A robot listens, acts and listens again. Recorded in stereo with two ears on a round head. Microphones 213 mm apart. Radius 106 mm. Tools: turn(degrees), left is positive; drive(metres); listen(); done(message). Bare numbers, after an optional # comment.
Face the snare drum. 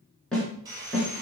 turn(30)
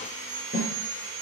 # So it is at 145° left.
turn(145)
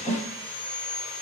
done("Facing the snare drum, 2 to 4 m away.")